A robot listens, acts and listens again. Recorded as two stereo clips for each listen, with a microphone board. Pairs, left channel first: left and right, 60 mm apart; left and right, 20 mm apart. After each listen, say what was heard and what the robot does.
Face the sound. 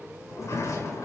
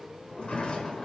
The sliding door: about 60° left or 120° left. Turn 60° left.
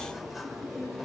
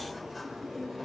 Facing the sliding door, over 4 m away.